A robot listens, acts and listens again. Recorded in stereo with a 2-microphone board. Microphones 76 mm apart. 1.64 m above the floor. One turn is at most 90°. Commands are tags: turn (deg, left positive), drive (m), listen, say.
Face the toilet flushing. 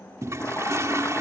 <turn deg="-40"/>
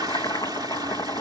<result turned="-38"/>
<turn deg="-90"/>
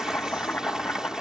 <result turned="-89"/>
<turn deg="-10"/>
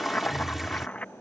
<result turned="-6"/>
<say>Found it: a toilet flushing, straight ahead.</say>